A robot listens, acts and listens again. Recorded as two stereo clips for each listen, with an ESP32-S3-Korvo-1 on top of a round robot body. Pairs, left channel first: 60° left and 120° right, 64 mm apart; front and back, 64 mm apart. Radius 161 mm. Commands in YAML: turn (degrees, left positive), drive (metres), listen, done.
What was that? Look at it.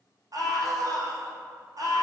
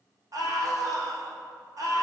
turn: -150
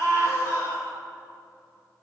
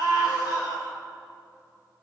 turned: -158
turn: 10
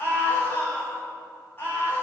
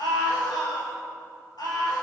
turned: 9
done: "Facing the scream, 2 to 4 m away."